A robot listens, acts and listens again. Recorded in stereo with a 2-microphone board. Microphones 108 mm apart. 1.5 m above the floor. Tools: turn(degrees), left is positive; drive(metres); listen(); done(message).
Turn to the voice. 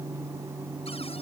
listen()
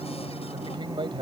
turn(degrees=-45)
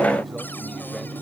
listen()
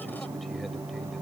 listen()
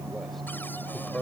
done("Found it: a man speaking, straight ahead.")